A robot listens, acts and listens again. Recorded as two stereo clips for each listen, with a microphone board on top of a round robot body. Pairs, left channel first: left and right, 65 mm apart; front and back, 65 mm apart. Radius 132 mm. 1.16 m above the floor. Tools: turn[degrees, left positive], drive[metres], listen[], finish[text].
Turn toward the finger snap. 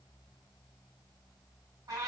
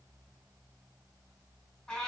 Action: listen[]
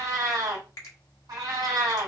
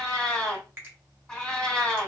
Thought: The finger snap: 125° left.
Action: turn[125]
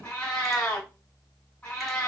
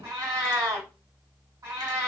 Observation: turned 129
Action: listen[]
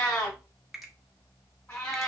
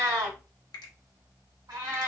Action: finish[Found it: a finger snap, straight ahead, 1 to 2 m away.]